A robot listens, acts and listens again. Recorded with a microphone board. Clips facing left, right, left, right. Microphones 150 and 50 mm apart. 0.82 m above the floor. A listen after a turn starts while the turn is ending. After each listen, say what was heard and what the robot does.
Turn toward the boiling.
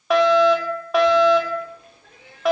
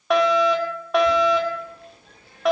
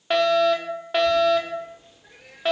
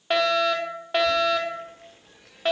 Turn 90° right.
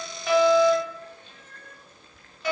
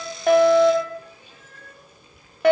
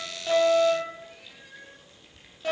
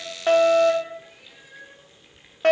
So it is at 10° right. Turn 10° right.
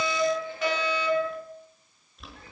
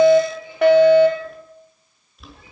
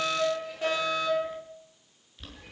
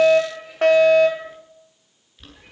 Facing the boiling.